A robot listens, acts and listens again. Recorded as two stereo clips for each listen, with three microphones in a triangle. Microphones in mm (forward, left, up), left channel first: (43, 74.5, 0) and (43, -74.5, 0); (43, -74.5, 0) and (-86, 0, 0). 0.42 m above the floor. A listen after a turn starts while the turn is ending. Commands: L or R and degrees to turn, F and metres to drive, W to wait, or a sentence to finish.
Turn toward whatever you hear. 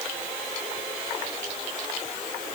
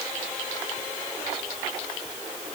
W
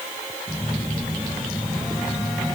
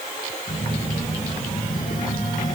Facing the phone buzzing.